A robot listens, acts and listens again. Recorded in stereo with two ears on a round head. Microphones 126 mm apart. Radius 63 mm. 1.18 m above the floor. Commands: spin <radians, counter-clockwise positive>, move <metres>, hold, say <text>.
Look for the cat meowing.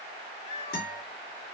spin 0.96
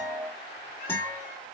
hold
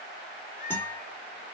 spin 1.13
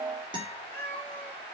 spin 0.17
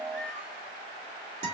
hold
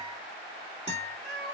say Facing the cat meowing, 2 to 4 m away.